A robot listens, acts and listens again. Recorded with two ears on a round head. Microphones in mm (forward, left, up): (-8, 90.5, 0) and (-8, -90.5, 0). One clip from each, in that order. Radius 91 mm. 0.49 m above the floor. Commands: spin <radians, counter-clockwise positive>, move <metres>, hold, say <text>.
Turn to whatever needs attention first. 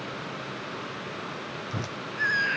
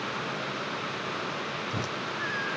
spin 1.57
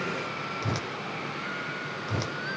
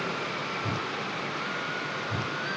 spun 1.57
hold
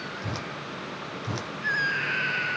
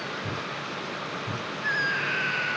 say Facing the scream.